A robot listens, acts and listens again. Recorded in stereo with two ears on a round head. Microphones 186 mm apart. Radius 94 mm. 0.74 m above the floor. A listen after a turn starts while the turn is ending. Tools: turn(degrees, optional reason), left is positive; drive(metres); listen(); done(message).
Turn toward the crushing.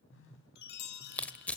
turn(degrees=30)
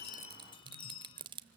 turn(degrees=-25, reason="So it is at 25° right.")
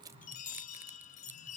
listen()
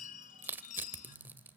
turn(degrees=-10, reason="The crushing is now 10° right.")
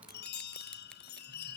listen()
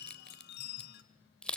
done("Facing the crushing, under 1 m away.")